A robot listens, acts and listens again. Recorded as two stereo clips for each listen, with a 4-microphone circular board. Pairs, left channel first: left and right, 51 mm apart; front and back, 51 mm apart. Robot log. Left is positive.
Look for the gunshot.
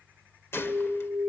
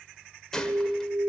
note: The gunshot: 75° left.
cmd yaw +75
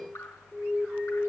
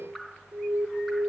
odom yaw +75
end: I heard a gunshot from this way, but can't make it out now.